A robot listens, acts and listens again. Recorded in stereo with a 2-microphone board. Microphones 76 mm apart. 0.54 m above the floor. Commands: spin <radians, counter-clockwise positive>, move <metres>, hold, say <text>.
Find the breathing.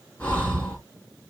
spin 0.35
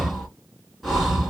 say Found it: breathing, straight ahead, 1 to 2 m away.